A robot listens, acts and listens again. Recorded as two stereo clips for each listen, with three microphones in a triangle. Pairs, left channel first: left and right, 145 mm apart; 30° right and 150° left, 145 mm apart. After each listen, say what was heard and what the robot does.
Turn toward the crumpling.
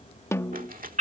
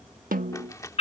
The crumpling: 100° right. Turn 100° right.
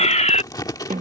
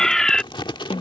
The crumpling is now 25° left. Turn 25° left.
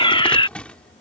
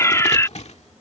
The crumpling is now 10° left. Turn 10° left.
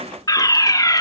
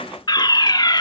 Keep listening.
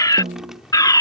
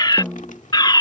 Keep listening.
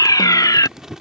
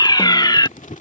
Facing the crumpling.